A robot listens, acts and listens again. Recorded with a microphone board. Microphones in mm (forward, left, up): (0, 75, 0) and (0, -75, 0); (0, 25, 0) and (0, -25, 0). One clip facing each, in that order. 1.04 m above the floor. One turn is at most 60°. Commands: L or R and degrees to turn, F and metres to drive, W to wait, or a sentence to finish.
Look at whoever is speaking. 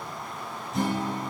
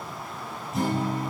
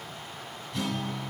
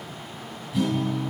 W
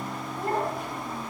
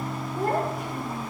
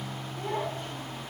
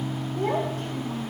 R60
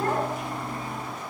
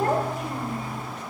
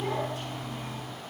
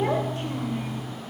R40
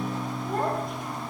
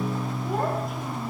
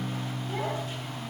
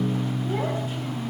W
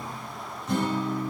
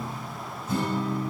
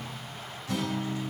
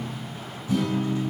W
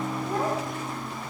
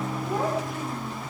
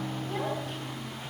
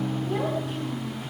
Facing the child speaking, 2 to 4 m away.